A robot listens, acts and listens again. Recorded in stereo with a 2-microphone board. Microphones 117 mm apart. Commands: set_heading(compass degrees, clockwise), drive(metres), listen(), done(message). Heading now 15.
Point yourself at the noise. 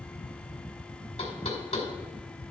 set_heading(305)
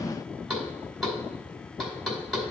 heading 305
done("Found it: knocking, straight ahead, 2 to 4 m away.")